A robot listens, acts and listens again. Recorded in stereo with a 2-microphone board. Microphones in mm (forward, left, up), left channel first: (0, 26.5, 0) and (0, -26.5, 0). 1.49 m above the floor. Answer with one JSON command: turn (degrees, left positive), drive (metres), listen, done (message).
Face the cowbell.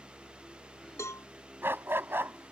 {"turn": 70}
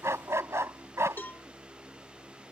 {"turn": 35}
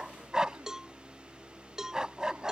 {"turn": -15}
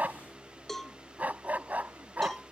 {"done": "Facing the cowbell."}